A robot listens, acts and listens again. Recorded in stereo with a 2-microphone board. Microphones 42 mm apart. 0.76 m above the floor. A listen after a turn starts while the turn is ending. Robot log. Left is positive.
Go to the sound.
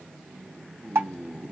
cmd yaw -90
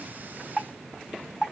cmd fwd 1.0
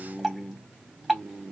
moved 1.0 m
cmd fwd 1.0
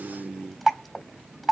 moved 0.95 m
cmd fwd 1.0
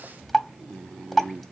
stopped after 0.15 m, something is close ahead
end: Arrived at the dripping, straight ahead.